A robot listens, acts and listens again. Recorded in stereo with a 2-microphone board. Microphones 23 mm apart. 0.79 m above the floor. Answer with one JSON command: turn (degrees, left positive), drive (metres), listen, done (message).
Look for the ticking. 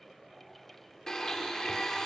{"listen": true}
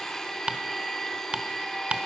{"turn": -50}
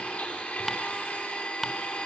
{"done": "Facing the ticking, under 1 m away."}